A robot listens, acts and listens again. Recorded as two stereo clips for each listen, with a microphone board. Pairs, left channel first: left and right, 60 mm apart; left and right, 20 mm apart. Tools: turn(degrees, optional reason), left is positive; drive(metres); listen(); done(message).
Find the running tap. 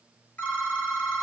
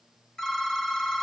listen()
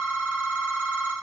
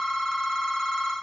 listen()
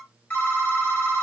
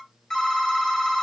done("I can't make out a running tap, only a phone ringing.")